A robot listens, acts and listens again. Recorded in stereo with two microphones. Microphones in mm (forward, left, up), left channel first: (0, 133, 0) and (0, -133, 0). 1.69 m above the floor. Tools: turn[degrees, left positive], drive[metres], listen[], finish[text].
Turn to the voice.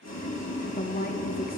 Thought: The woman speaking: about 30° left or 150° left.
Action: turn[30]
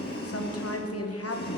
Thought: So it is at 110° left.
Action: turn[110]
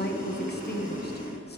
Thought: The woman speaking is now 40° left.
Action: turn[40]
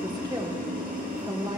Thought: The woman speaking is now 15° right.
Action: turn[-15]
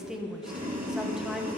Action: finish[Found it: a woman speaking, straight ahead.]